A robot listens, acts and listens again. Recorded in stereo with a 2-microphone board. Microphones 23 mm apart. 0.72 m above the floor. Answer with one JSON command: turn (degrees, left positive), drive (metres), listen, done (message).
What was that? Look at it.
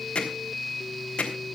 {"turn": 45}
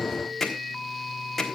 {"done": "Facing the hammering."}